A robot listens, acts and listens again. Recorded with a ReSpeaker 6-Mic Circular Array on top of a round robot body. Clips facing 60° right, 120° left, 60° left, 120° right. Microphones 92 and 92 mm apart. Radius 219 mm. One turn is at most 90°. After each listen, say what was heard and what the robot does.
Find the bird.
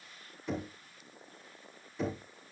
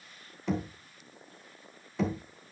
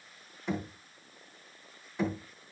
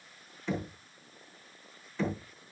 Keep listening.
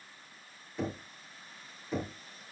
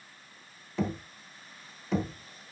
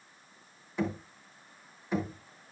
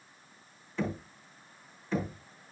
Keep listening.
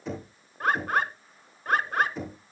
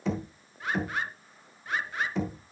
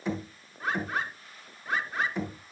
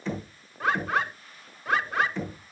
The bird: 105° right. Turn 90° right.
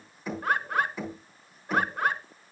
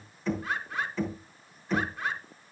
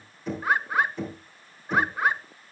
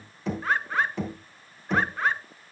The bird is now 20° right. Turn 20° right.
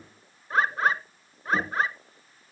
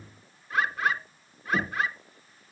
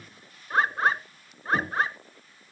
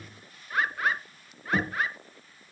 Found it: a bird, straight ahead.